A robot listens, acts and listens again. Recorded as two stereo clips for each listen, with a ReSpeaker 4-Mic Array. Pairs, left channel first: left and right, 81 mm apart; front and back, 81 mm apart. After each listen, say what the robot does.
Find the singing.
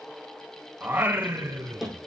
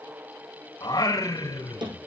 Turn 40° right.
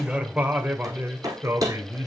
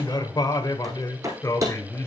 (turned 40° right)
Turn 50° right.
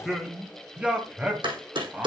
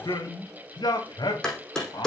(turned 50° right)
Turn 20° right.
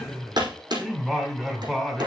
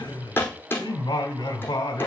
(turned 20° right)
Found it: singing, straight ahead.